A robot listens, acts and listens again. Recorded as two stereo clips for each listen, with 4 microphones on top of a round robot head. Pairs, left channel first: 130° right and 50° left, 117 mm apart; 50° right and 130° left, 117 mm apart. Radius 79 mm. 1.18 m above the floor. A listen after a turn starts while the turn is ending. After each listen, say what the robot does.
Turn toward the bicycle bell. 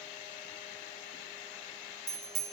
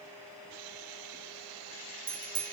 Turn 85° left.
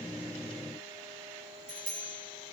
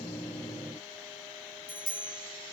Found it: a bicycle bell, straight ahead, 2 to 4 m away.